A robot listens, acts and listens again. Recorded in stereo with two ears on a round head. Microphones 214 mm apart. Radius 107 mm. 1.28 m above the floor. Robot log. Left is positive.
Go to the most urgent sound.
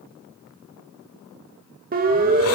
note: The siren: about 40° right or 140° right.
cmd yaw -40
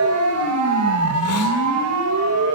note: So it is at 100° right.
cmd yaw -100
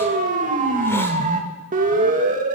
note: The siren is now 35° right.
cmd yaw -35
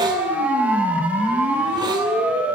cmd fwd 1.0
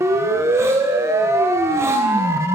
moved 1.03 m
note: The siren is now 15° right.
cmd yaw -15
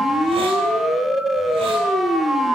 cmd fwd 1.0
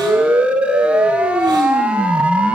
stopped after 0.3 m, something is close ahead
end: Arrived at the siren, straight ahead.